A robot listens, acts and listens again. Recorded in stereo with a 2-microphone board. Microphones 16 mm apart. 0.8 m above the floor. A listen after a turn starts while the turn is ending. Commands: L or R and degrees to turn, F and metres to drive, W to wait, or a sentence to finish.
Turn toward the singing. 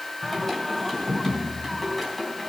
L30
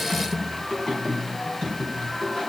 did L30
L140
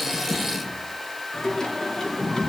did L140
L35
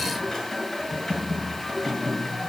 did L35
L15
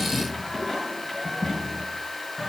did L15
Facing the singing.